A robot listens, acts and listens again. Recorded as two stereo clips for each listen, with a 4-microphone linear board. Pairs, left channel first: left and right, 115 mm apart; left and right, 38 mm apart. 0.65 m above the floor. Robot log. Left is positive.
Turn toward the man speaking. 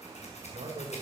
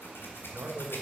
note: The man speaking: about 65° right or 115° right.
cmd yaw -65
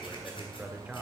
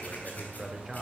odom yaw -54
note: So it is at 10° right.
cmd yaw -10
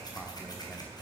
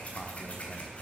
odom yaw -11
cmd idle
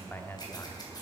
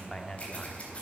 note: The man speaking is now 20° left.
cmd yaw +20
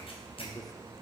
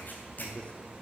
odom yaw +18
cmd idle
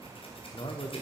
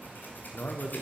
note: The man speaking is now 50° left.
cmd yaw +50
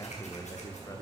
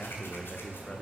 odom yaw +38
note: The man speaking is now 30° left.
cmd yaw +30
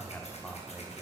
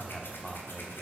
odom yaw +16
note: The man speaking is now 15° left.
cmd yaw +15
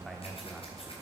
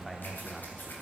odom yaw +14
end: Found it: a man speaking, straight ahead, 1 to 2 m away.